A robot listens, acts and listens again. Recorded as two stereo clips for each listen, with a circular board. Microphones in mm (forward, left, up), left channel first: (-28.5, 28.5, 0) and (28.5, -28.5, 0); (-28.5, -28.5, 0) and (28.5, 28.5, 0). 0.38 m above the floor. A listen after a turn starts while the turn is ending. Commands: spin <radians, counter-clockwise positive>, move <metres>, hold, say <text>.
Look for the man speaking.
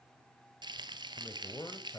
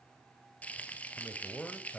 spin 2.71
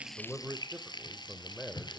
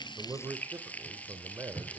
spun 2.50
spin 1.05
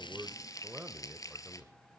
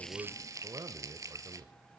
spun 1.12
spin 0.79
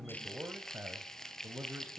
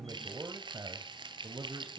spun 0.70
spin 0.35
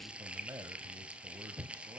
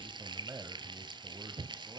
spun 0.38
say Found it: a man speaking, straight ahead.